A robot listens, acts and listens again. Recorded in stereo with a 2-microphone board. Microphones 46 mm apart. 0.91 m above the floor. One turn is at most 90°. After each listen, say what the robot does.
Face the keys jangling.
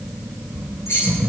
Turn 75° left.
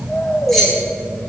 Found it: keys jangling, straight ahead.